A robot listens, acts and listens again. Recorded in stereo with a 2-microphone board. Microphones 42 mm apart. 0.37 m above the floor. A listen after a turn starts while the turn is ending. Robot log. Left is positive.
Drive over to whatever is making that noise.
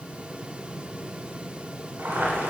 note: The boiling: about 65° right or 115° right.
cmd yaw -65
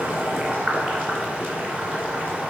note: So it is at 45° right.
cmd yaw -45
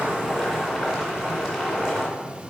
cmd fwd 1.0
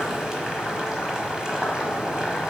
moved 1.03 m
note: The boiling is now 15° right.
cmd yaw -15
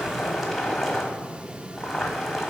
cmd fwd 1.0
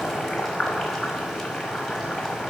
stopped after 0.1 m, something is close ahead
end: Arrived at the boiling, straight ahead.